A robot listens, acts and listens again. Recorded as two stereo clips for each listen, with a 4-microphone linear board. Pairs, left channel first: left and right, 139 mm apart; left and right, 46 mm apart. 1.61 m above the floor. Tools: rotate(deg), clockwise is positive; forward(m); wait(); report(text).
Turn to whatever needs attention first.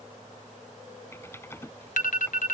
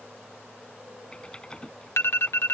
rotate(-70)
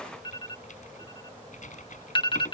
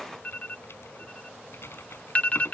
rotate(-35)
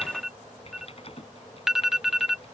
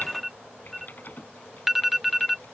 report("Facing the alarm.")